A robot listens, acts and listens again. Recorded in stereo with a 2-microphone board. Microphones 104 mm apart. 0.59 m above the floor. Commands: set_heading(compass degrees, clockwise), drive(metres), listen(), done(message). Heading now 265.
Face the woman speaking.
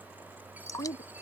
set_heading(195)
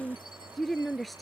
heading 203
done("Found it: a woman speaking, straight ahead.")